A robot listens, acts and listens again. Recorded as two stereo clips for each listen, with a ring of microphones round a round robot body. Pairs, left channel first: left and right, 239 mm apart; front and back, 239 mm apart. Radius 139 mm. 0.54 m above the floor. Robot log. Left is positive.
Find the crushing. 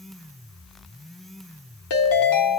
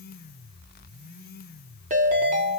cmd idle
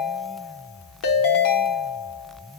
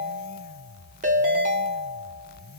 cmd idle
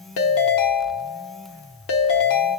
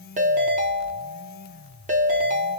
end: I can't make out crushing to turn to.